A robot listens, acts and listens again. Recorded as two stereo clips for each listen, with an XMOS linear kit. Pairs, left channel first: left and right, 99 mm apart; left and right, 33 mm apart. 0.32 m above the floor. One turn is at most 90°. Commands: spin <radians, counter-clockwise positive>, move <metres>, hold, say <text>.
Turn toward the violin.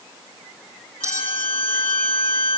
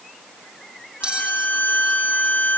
spin 1.22
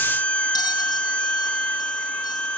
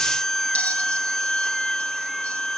spin 0.26
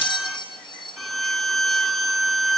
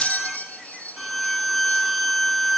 say Facing the violin, 1 to 2 m away.